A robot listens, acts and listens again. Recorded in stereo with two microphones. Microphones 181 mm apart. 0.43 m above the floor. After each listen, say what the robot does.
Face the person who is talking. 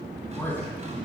Turn 30° left.
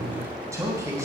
Turn 20° right.
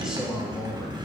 Found it: a man speaking, straight ahead.